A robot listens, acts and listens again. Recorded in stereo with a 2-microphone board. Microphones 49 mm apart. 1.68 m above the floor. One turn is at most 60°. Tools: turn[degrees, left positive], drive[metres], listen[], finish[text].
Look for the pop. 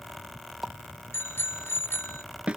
Action: turn[-30]
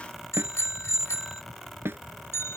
Action: listen[]
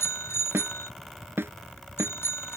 Action: finish[I heard a pop, but can't make it out now. It was about 25° left or 145° right.]